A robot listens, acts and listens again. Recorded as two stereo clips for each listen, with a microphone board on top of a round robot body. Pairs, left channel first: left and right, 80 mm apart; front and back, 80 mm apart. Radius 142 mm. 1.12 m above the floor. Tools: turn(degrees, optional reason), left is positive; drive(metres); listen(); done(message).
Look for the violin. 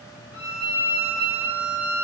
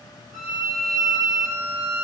turn(degrees=-155, reason="The violin: 155° right.")
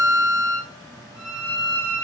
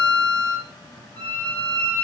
turn(degrees=-10, reason="The violin is now 10° right.")
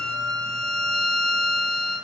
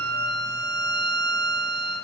done("Facing the violin.")